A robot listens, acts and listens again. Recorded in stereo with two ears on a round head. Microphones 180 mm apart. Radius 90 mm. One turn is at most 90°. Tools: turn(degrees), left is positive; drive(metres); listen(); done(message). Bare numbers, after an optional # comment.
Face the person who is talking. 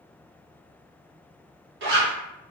listen()
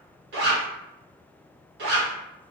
listen()
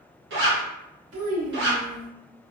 # The child speaking: about 70° right or 110° right.
turn(-70)
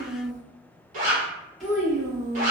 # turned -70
done("Found it: a child speaking, straight ahead.")